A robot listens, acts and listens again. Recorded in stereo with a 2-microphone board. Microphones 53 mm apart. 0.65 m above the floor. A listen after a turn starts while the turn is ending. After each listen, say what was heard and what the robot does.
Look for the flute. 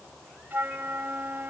The flute: about 40° right or 140° right. Turn 40° right.
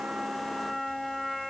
Facing the flute.